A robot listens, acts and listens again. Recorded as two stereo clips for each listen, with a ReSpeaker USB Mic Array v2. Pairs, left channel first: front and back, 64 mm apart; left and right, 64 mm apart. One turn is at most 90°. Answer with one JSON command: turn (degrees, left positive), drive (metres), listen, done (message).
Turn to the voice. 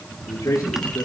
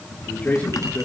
{"turn": 20}
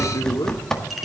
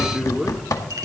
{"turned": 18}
{"done": "Facing the man speaking."}